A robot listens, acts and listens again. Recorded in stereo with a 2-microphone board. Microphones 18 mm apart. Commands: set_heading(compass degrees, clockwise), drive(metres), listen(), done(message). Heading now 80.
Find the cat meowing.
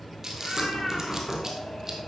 set_heading(350)
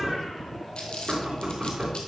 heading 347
listen()
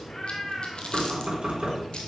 set_heading(312)
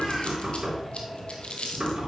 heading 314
listen()
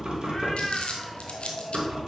set_heading(294)
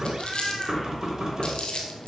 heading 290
done("Found it: a cat meowing, straight ahead, 2 to 4 m away.")